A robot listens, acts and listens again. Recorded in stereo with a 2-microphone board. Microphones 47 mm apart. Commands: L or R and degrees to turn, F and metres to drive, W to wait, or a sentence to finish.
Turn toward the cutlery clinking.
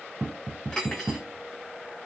L20
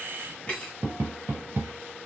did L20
L140
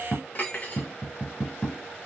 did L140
L35
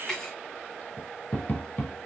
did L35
L10
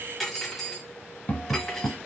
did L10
Found it: cutlery clinking, straight ahead.